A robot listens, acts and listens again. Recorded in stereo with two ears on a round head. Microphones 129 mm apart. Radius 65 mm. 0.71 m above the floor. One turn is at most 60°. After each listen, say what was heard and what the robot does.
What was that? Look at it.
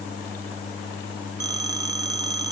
The phone ringing: about 25° right or 155° right. Turn 25° right.
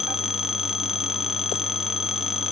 Found it: a phone ringing, straight ahead.